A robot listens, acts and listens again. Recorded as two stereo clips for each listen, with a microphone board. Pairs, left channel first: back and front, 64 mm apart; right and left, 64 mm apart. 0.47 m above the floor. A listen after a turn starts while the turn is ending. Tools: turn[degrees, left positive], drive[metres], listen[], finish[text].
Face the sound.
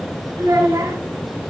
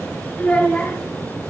Thought: The child speaking: 25° right.
Action: turn[-25]
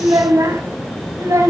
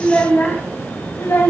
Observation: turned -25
Thought: The child speaking is now 40° right.
Action: turn[-40]
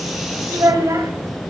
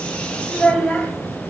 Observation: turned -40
Thought: The child speaking is now 25° right.
Action: turn[-25]
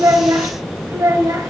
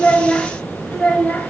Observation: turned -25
Thought: The child speaking is now 25° right.
Action: turn[-25]
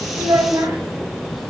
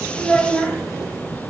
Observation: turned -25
Thought: The child speaking is now 25° right.
Action: turn[-25]
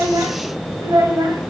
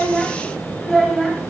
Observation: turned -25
Action: finish[Found it: a child speaking, straight ahead.]